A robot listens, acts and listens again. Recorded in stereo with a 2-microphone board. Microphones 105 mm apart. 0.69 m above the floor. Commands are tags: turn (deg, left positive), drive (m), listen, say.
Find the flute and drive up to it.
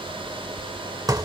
<listen/>
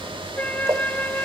<turn deg="15"/>
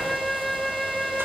<drive m="1.0"/>
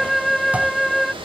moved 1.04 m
<drive m="1.0"/>
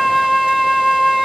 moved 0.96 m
<drive m="1.0"/>
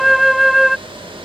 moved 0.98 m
<drive m="1.0"/>
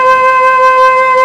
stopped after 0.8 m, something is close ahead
<say>I am next to the flute.</say>